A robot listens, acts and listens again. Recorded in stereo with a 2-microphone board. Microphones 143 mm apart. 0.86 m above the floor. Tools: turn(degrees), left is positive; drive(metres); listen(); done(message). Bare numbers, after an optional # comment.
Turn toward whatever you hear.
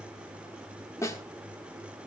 # The snare drum: about 20° left or 160° left.
turn(20)
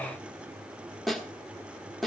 done("Facing the snare drum.")